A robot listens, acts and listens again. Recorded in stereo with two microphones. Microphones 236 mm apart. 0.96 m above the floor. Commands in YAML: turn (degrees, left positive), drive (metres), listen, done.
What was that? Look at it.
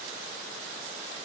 listen: true
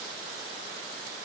listen: true
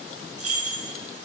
turn: -75
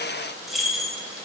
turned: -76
done: "Found it: keys jangling, straight ahead, 1 to 2 m away."